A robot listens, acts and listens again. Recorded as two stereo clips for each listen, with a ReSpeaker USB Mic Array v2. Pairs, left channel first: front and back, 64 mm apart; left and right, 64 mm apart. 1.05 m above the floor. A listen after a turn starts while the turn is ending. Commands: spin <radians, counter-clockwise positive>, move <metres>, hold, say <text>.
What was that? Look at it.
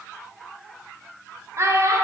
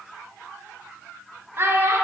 spin -2.44
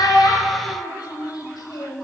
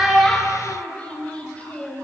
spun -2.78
spin 0.35
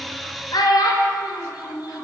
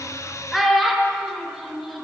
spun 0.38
say Found it: a child speaking, straight ahead.